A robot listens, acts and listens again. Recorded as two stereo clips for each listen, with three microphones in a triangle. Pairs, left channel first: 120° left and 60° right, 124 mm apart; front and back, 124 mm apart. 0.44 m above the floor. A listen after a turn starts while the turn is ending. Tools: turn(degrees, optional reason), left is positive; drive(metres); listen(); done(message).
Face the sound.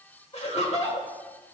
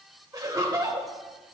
turn(degrees=125, reason="The laughter: 125° left.")
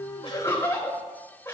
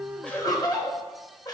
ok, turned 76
turn(degrees=50, reason="The laughter is now 50° left.")
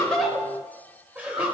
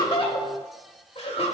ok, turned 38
turn(degrees=15, reason="The laughter is now 15° left.")
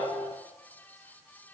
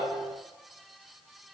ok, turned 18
listen()
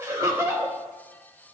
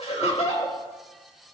done("Found it: laughter, straight ahead, 1 to 2 m away.")